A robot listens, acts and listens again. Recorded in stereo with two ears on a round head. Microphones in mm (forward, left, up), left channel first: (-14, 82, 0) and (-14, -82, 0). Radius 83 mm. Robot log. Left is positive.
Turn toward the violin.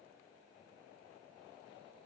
cmd idle
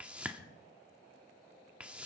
cmd idle
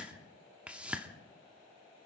end: I can't make out a violin to turn to.